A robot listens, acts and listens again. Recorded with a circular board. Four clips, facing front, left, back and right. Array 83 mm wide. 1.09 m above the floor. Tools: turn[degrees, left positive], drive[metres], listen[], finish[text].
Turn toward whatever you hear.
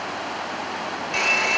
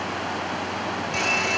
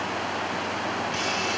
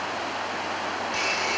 Action: finish[Facing the hair dryer, over 4 m away.]